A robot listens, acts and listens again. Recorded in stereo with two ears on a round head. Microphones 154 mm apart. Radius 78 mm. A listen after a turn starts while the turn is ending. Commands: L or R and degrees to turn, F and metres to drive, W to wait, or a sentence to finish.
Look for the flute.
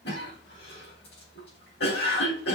W
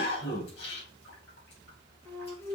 L30
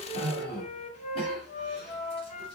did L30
L135
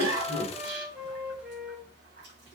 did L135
Facing the flute, 1 to 2 m away.